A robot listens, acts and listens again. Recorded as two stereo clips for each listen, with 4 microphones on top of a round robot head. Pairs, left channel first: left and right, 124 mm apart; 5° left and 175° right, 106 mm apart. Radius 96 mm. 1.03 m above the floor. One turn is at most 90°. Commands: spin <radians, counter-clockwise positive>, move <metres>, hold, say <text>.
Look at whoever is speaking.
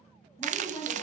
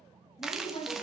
spin 0.44
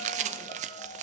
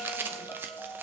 hold
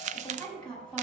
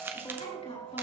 spin 0.17
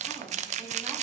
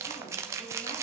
hold
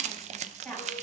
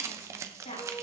say Facing the woman speaking, over 4 m away.